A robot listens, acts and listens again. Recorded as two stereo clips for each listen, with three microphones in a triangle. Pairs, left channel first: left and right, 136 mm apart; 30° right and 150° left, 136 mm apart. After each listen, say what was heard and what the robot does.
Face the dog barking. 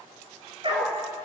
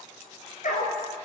The dog barking: 40° right. Turn 40° right.
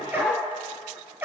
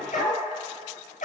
The dog barking is now 15° right. Turn 15° right.
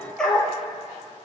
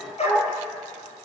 Facing the dog barking, over 4 m away.